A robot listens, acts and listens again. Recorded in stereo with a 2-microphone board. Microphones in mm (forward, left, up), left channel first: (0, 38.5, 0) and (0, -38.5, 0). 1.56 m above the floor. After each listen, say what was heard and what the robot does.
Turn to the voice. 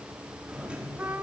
Keep listening.
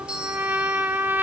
Keep listening.
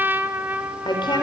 Turn 90° left.
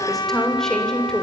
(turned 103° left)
So it is at 10° left. Turn 10° left.
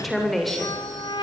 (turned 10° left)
Facing the woman speaking, over 4 m away.